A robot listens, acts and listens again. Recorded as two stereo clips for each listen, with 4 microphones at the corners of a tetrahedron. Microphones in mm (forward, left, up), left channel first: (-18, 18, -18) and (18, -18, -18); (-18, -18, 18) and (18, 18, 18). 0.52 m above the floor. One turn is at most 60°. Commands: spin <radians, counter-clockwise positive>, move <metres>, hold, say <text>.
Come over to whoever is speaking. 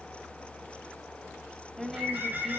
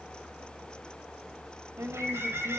spin 0.79
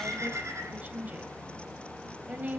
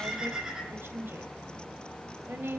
move 1.0
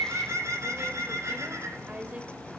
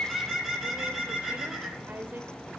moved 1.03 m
spin 0.17
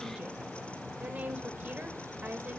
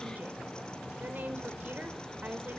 move 1.0
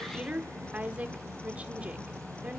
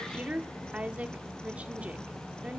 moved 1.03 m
move 1.0
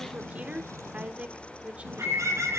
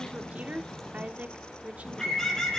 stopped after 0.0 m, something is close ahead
say I am next to the woman speaking.